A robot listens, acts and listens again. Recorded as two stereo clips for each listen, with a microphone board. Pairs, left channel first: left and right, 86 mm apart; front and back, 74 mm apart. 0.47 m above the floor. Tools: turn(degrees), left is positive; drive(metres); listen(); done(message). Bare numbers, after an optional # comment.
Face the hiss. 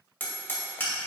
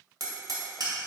listen()
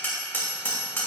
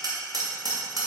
listen()
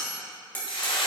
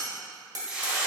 # The hiss: 100° left.
turn(100)
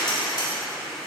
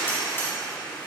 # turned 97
done("Facing the hiss.")